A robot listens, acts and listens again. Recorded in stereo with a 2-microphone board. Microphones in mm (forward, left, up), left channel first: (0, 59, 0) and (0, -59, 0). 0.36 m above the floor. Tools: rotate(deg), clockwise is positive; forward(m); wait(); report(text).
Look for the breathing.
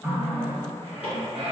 rotate(65)
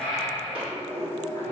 report("Facing the breathing, under 1 m away.")